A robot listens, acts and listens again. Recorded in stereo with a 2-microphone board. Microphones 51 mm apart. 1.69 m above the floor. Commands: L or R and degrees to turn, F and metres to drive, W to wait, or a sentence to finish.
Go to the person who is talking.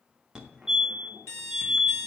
W
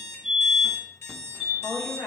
L65
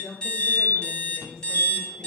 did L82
R15
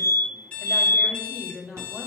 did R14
F1.0
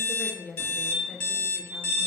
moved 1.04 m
F1.0
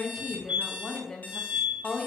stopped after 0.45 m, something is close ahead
L10
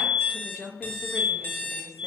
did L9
I am next to the woman speaking.